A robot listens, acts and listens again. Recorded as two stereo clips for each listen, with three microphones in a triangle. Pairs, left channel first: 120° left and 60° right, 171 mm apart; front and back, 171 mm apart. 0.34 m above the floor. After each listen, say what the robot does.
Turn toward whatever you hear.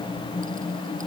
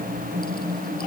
Keep listening.
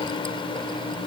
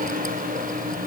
Keep listening.
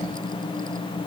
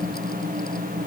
I can't make out anything.